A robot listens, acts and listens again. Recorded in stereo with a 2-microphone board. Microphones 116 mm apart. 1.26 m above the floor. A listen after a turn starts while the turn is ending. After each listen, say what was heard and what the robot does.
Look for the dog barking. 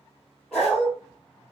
Turn 30° left.
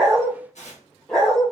Turn 30° left.
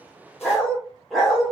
Turn 30° right.
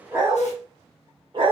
So it is at 135° right. Turn 135° right.
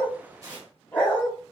The dog barking is now 15° left. Turn 15° left.
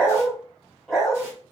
Facing the dog barking, 1 to 2 m away.